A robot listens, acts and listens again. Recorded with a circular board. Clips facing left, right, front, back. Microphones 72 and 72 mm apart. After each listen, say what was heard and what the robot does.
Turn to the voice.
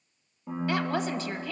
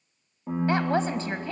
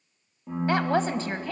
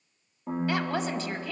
The woman speaking: 40° right. Turn 40° right.
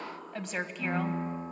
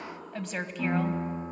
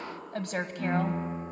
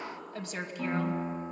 Facing the woman speaking, 1 to 2 m away.